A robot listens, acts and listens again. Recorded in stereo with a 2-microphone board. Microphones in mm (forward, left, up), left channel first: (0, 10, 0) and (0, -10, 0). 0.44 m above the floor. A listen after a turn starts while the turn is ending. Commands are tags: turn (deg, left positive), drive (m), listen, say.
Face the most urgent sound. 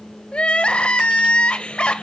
<turn deg="70"/>
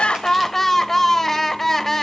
<turn deg="15"/>
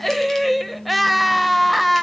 <say>Found it: crying, straight ahead.</say>